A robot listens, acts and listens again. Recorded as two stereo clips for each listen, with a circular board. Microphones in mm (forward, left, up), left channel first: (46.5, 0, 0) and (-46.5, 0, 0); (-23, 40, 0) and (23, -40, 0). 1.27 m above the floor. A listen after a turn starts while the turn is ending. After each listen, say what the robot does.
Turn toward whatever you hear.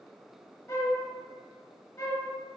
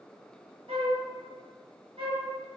Turn 60° right.
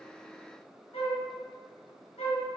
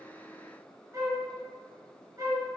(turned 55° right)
Found it: a flute, straight ahead.